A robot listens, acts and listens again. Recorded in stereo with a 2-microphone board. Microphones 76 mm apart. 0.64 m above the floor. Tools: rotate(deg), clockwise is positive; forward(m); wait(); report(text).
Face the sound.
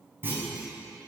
rotate(25)
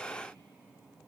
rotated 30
wait()
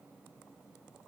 report("I heard a clunk, but can't make it out now. It was about 5° left or 125° right.")